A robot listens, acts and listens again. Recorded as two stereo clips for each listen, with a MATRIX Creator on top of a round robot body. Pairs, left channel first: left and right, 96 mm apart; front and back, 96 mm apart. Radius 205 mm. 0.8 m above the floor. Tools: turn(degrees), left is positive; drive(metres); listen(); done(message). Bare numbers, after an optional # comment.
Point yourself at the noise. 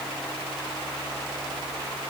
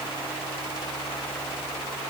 listen()
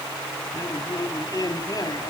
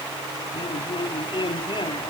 # The man speaking: 40° left.
turn(40)
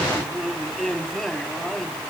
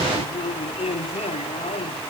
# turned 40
done("Found it: a man speaking, straight ahead.")